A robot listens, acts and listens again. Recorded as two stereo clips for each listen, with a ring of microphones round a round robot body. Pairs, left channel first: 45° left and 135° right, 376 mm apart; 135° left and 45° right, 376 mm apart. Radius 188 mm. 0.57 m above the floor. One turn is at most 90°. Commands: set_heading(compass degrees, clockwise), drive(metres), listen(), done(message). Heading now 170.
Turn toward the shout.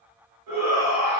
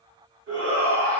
set_heading(260)
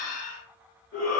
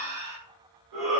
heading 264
set_heading(274)
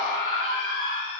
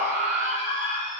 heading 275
done("Found it: a shout, straight ahead.")